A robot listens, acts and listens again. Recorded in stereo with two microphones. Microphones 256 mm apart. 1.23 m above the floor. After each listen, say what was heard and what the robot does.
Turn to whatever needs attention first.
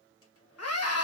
The scream: about 70° left or 110° left. Turn 70° left.
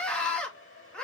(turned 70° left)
Facing the scream, 2 to 4 m away.